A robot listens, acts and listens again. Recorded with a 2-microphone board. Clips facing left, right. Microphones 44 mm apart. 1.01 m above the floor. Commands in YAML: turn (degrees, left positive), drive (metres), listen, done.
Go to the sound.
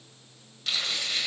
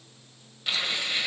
turn: -30
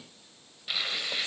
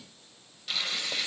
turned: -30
turn: 15
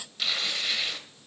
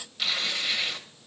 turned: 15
drive: 1.0
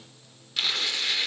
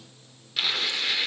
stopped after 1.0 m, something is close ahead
done: "Arrived at the tearing paper, straight ahead."